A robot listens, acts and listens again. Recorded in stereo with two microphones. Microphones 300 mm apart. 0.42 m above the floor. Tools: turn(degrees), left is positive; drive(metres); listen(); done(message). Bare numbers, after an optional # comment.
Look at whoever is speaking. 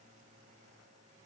listen()
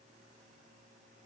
listen()
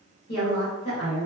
# The woman speaking: about 55° left or 125° left.
turn(55)
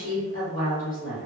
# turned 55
# So it is at 50° left.
turn(50)
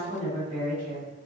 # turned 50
done("Found it: a woman speaking, straight ahead, 1 to 2 m away.")